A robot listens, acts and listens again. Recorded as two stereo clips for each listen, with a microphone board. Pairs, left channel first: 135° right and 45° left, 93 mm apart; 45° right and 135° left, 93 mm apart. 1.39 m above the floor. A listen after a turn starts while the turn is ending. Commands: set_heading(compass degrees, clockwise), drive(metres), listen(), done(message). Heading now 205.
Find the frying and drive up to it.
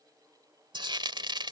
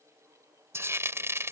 set_heading(130)
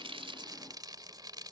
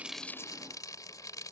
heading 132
drive(1.0)
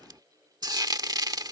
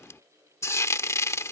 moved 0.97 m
set_heading(122)
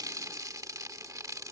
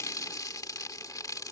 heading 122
drive(1.0)
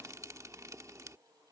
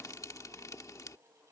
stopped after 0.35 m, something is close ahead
listen()
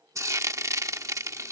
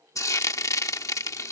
done("I am next to the frying.")